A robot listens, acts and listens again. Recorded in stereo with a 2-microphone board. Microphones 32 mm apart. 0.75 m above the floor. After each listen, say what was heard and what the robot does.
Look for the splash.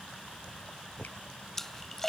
Turn 30° left.
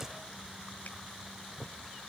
Keep listening.
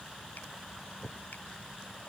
I heard a splash, but can't make it out now. It was about 20° right or 140° left.